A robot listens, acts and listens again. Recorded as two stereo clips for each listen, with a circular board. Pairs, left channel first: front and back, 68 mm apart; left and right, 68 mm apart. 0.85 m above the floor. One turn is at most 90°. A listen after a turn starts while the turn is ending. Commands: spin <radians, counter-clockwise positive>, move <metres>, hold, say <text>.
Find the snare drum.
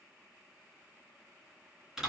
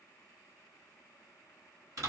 hold
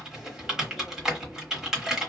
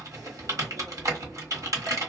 hold
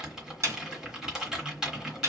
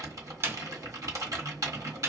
spin -1.57
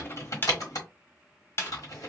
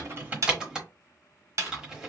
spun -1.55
spin -0.96
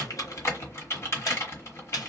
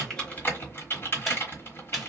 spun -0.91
say Facing the snare drum, under 1 m away.